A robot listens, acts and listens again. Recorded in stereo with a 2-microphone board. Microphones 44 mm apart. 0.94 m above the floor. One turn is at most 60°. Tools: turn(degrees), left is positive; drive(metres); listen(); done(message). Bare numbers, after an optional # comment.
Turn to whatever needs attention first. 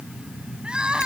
# The crying: about 20° right or 160° right.
turn(-20)
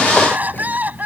# So it is at 140° right.
turn(-60)
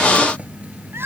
# The crying is now 65° right.
turn(-60)
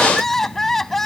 # The crying is now 10° left.
turn(10)
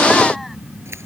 listen()
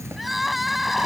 done("Facing the crying.")